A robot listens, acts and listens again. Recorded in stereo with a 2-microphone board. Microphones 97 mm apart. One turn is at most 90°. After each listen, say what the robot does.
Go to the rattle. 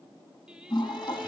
Keep listening.
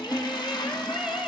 Keep listening.
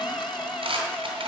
Turn 75° right.
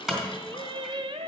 Drive 1.0 m forward.
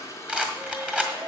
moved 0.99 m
Turn 15° right.
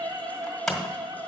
Drive 1.0 m forward.
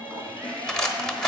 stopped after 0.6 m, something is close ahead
I am next to the rattle.